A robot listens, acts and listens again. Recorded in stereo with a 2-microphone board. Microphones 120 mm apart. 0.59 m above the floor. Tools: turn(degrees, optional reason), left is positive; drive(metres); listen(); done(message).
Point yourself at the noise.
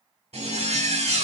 turn(degrees=-60, reason="The zipper: about 60° right or 120° right.")
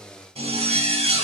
turn(degrees=-60, reason="So it is at 60° right.")
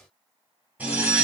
turn(degrees=-10, reason="The zipper is now 10° right.")
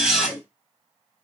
done("Found it: a zipper, straight ahead.")